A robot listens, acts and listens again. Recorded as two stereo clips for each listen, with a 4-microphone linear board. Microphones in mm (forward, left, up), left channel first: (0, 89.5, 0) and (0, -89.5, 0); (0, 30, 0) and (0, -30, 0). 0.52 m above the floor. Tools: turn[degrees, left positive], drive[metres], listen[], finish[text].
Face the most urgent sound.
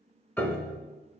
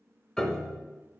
Action: listen[]
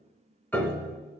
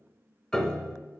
Action: listen[]
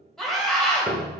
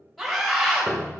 Action: turn[30]
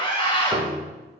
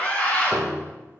Thought: So it is at 150° left.
Action: turn[150]
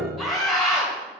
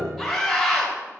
Action: finish[Found it: a scream, straight ahead.]